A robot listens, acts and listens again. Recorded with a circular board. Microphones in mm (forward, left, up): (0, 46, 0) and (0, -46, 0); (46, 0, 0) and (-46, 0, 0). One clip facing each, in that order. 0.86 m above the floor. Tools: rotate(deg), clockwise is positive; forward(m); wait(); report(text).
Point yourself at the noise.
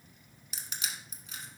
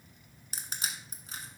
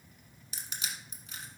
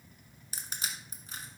rotate(135)
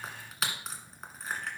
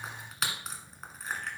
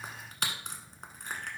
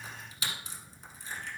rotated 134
report("Facing the crushing.")